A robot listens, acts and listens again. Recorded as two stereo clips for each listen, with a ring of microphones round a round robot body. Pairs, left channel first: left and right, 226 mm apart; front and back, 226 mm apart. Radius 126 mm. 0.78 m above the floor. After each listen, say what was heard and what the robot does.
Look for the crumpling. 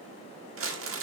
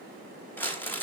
The crumpling: 80° right. Turn 80° right.
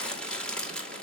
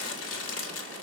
Facing the crumpling, 2 to 4 m away.